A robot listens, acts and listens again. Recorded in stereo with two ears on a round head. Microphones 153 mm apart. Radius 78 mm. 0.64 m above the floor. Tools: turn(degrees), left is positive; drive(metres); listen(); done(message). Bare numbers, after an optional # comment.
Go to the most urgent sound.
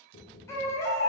# The baby crying: about 15° left or 165° left.
turn(15)
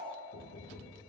listen()
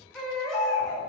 drive(1.0)
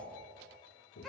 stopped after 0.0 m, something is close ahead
listen()
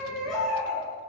done("Blocked. The baby crying is further on, straight ahead.")